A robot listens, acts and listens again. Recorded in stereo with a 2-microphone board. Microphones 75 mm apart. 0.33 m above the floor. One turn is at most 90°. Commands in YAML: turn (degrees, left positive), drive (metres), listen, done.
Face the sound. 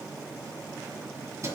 turn: -40
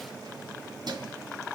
turn: -90
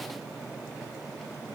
listen: true
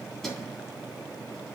done: "Facing the keys jangling, 2 to 4 m away."